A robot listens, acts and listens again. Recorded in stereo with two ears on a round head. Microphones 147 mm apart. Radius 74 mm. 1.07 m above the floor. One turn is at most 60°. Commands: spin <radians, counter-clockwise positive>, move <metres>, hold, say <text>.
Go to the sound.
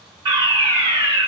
spin -0.52
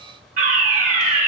spin -1.05
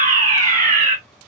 spin -0.96
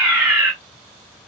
move 1.0
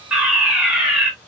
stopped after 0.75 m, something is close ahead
spin -0.17
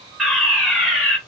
say I am next to the fire alarm.